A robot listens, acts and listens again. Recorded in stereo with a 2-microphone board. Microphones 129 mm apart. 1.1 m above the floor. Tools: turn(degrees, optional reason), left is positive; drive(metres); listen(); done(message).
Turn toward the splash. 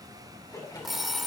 turn(degrees=30, reason="The splash: about 30° left or 150° left.")
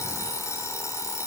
listen()
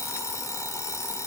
done("I heard a splash, but can't make it out now. It was about straight ahead or 120° left.")